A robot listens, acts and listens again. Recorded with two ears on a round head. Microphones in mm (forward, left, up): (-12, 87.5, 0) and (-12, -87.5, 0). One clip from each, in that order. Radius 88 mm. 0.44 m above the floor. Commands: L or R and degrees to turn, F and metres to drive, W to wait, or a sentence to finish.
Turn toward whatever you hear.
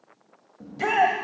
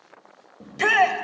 R65
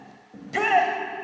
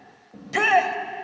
R30
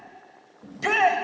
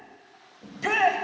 Found it: a shout, straight ahead, 1 to 2 m away.